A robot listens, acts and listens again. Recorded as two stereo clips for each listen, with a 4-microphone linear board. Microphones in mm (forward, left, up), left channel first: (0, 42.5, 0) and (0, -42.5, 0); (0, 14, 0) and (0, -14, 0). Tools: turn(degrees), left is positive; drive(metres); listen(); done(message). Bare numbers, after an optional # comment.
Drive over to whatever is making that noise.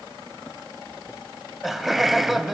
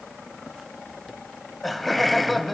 turn(30)
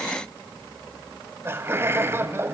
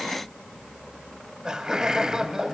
# So it is at 35° right.
turn(-35)
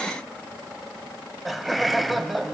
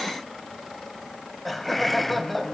drive(1.0)
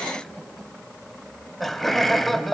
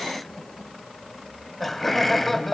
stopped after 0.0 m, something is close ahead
done("Blocked. The laughter is further on, straight ahead.")